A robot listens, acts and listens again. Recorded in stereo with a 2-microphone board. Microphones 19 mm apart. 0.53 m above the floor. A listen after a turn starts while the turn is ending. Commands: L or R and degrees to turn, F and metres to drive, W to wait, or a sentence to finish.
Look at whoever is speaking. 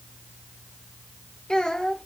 L45
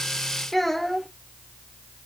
L10
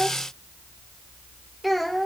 Facing the child speaking.